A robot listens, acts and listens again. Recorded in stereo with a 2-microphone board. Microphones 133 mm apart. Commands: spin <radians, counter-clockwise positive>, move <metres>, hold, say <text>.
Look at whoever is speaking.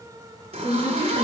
spin 0.79
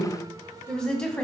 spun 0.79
say Facing the woman speaking, 2 to 4 m away.